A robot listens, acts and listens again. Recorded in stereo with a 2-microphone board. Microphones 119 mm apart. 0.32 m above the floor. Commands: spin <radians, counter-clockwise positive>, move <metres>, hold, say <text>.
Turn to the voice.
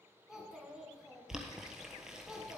spin -0.52
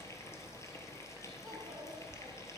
hold
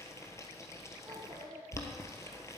spin -2.53
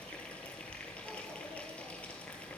hold
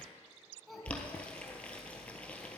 say Found it: a child speaking, straight ahead, 2 to 4 m away.